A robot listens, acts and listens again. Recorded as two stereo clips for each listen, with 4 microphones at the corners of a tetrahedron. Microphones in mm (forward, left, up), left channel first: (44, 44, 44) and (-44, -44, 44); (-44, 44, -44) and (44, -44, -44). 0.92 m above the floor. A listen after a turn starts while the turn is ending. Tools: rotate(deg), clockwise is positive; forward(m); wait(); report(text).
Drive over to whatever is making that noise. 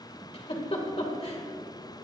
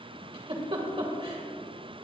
forward(1.0)
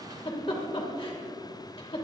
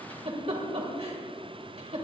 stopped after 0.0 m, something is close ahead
report("Blocked. The giggle is further on, straight ahead.")